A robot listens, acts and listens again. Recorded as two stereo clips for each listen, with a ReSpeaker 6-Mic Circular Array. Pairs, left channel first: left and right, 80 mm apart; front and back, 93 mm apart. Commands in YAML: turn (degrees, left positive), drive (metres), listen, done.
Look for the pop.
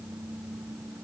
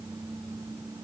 listen: true
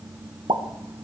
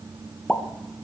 turn: -85
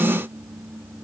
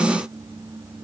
done: "I heard a pop from this way, but can't make it out now."